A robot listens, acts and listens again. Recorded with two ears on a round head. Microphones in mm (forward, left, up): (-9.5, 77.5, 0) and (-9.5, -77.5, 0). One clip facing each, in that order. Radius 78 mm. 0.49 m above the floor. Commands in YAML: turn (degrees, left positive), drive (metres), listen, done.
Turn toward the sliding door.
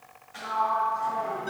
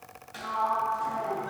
turn: -45
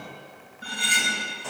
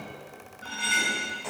done: "Facing the sliding door."